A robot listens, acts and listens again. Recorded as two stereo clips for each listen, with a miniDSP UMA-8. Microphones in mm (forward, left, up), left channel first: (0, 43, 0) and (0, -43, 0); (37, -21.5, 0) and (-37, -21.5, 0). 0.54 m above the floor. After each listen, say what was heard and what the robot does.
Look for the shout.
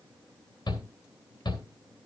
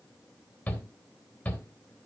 The shout: 70° left. Turn 70° left.
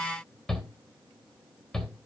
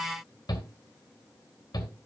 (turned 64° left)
Found it: a shout, straight ahead.